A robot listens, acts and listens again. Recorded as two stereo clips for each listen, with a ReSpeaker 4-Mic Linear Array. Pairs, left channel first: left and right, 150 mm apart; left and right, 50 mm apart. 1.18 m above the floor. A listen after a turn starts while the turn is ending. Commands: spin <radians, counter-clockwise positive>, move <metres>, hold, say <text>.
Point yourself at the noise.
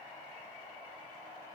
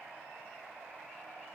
hold
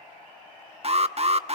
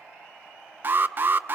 spin -0.79
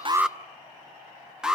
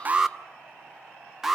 say Facing the alarm, under 1 m away.